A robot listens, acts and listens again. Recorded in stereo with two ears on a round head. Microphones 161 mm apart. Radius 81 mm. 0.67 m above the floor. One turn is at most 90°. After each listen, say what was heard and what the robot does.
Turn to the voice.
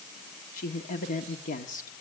The woman speaking: about 45° left or 135° left. Turn 45° left.
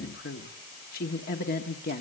So it is at 75° left. Turn 75° left.
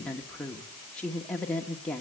Found it: a woman speaking, straight ahead.